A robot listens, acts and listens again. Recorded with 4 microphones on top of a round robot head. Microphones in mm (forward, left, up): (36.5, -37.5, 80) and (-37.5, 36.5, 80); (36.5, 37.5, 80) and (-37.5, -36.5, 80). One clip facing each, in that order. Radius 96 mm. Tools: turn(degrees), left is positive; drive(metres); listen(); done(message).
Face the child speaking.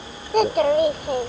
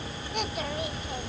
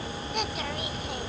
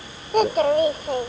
turn(degrees=-80)
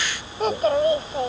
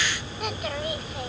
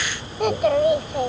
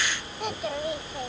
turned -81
turn(degrees=15)
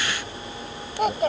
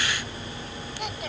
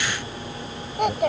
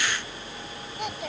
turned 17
done("Facing the child speaking.")